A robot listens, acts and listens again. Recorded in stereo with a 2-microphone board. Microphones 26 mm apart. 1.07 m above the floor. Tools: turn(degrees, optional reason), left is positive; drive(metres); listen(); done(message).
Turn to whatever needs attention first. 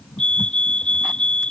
turn(degrees=50, reason="The fire alarm: about 50° left or 130° left.")
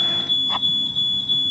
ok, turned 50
done("Found it: a fire alarm, straight ahead.")